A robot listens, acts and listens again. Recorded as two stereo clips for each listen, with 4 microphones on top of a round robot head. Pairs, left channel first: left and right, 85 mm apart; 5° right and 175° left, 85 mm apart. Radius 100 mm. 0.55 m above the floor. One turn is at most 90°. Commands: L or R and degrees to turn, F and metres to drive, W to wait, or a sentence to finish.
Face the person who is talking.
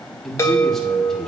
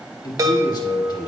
L10
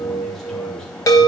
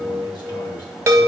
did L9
W
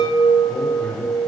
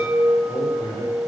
L15
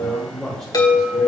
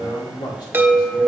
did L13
Found it: a man speaking, straight ahead.